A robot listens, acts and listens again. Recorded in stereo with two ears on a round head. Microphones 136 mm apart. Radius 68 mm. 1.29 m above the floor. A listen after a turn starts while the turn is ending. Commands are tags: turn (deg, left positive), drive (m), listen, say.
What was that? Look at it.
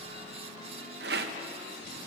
<turn deg="-70"/>
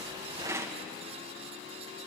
<turn deg="-20"/>
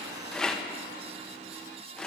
<say>Found it: a rattle, straight ahead.</say>